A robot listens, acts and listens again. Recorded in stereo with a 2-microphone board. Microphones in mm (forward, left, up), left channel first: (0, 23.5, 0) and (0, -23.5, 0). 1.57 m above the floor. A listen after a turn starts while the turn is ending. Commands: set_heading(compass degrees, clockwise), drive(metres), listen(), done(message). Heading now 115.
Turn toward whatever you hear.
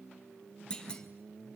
set_heading(95)
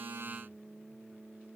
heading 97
listen()
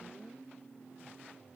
done("I heard a clunk, but can't make it out now. It was about straight ahead or 140° left.")